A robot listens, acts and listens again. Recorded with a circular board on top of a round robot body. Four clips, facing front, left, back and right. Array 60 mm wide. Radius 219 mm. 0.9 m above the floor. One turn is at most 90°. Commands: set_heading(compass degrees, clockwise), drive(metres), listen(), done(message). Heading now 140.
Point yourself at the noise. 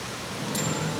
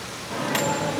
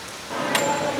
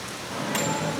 set_heading(50)
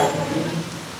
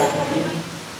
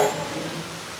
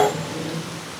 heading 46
set_heading(336)
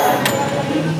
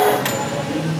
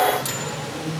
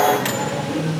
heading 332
done("Facing the microwave, 2 to 4 m away.")